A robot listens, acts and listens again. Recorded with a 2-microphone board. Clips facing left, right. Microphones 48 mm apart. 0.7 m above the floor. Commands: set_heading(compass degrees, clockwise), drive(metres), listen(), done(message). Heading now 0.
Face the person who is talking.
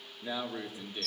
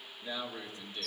set_heading(340)
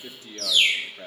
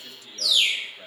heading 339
set_heading(209)
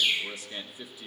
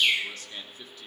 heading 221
set_heading(206)
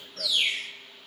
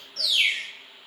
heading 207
listen()
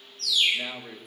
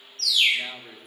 done("Facing the man speaking.")